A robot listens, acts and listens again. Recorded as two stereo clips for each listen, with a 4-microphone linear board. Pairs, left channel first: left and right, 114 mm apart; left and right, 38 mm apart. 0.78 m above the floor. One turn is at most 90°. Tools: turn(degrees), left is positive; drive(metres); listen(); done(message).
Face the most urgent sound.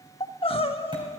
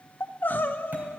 turn(degrees=55)
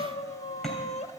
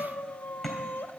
turn(degrees=75)
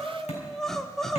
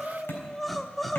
done("Found it: crying, straight ahead, 1 to 2 m away.")